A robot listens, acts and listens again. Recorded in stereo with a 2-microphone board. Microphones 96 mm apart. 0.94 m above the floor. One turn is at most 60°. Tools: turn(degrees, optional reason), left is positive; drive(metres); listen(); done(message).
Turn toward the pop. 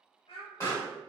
turn(degrees=35, reason="The pop: about 35° left or 145° left.")
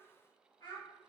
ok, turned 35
listen()
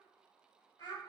done("I heard a pop, but can't make it out now. It was about straight ahead or 110° left.")